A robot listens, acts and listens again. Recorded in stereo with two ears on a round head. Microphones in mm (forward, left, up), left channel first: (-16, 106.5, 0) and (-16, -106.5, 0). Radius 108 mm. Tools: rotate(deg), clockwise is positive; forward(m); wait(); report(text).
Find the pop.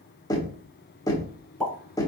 rotate(-30)
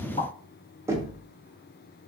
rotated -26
wait()
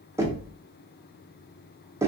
report("I heard a pop, but can't make it out now. It was about 20° right or 150° left.")